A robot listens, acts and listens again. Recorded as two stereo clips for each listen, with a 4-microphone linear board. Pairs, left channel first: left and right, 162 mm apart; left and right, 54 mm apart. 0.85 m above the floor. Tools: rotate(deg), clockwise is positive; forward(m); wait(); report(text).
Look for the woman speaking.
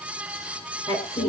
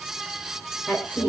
rotate(-30)
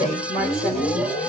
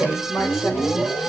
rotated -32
rotate(-125)
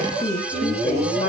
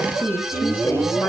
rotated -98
rotate(-35)
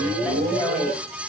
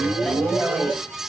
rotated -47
report("Found it: a woman speaking, straight ahead.")